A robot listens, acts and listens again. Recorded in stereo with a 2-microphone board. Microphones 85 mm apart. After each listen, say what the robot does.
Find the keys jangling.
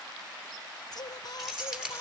Turn 30° right.
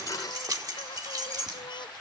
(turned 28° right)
Turn 130° right.
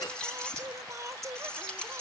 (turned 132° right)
Turn 10° left.
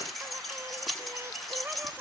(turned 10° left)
Facing the keys jangling, over 4 m away.